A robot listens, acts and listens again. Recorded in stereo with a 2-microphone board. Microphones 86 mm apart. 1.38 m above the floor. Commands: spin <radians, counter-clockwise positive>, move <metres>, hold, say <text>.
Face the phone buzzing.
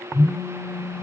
spin 1.05
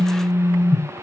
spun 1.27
spin 0.79
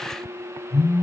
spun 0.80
say Facing the phone buzzing, 1 to 2 m away.